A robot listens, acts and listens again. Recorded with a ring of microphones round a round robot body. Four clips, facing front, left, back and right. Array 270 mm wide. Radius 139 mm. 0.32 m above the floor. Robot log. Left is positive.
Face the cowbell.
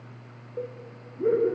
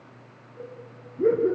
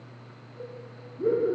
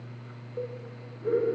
note: The cowbell: 35° right.
cmd yaw -35
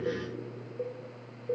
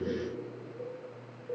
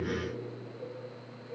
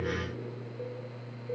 end: Found it: a cowbell, straight ahead, 2 to 4 m away.